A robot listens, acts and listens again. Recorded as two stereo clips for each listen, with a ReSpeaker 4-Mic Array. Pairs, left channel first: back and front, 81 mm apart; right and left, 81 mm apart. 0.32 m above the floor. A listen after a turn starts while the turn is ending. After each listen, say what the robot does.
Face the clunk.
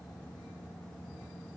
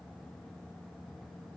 Keep listening.
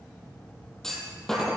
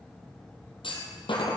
Turn 95° right.
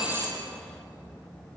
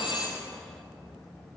Facing where the clunk came from. I can't hear it now.